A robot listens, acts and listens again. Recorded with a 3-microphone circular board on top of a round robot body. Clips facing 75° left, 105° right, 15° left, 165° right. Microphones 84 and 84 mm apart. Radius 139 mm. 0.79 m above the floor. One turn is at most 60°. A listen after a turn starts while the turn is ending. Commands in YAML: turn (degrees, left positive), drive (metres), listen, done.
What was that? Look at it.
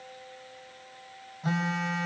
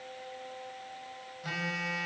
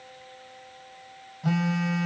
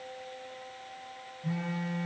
turn: 15
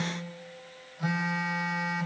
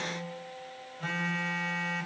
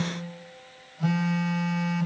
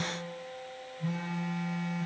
done: "Facing the phone buzzing, 2 to 4 m away."